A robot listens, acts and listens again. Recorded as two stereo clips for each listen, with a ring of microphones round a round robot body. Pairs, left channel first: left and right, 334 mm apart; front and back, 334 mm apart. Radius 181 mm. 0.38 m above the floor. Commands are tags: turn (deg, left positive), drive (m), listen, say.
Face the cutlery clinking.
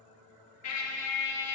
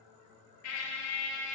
<listen/>
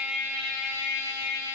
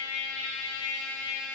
<listen/>
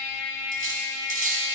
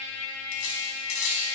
<turn deg="-25"/>
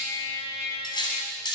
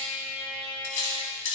<turn deg="15"/>
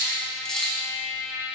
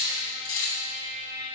<say>Found it: cutlery clinking, straight ahead.</say>